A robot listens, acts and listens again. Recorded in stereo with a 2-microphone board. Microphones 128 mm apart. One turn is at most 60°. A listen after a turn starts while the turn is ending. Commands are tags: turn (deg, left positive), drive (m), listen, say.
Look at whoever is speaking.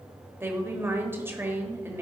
<turn deg="-20"/>
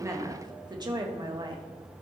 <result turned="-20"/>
<turn deg="-60"/>
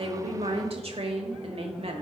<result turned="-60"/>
<turn deg="-60"/>
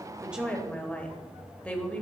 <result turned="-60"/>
<turn deg="15"/>
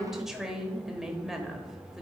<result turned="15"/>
<say>Found it: a woman speaking, straight ahead.</say>